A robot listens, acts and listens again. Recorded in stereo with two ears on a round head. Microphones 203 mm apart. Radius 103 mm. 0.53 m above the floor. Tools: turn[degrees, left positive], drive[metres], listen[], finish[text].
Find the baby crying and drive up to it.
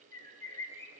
Action: listen[]
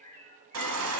Thought: The baby crying: about 70° right or 110° right.
Action: turn[-70]
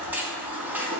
Thought: So it is at 10° right.
Action: turn[-10]
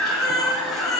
Action: drive[1.0]
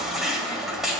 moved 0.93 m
Action: drive[1.0]
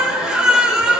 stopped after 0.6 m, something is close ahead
Action: finish[Arrived at the baby crying, straight ahead.]